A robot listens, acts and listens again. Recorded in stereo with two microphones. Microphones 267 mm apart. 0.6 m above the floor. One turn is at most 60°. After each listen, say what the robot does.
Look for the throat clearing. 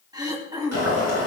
Turn 30° right.
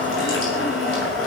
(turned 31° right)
Keep listening.
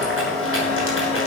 Keep listening.
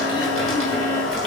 I heard throat clearing, but can't make it out now. It was about 15° left or 135° right.